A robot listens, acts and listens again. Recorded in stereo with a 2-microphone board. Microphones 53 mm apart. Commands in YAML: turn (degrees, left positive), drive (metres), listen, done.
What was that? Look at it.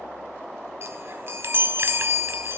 turn: -45
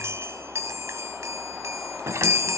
turn: -80
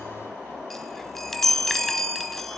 done: "Found it: a chime, straight ahead, under 1 m away."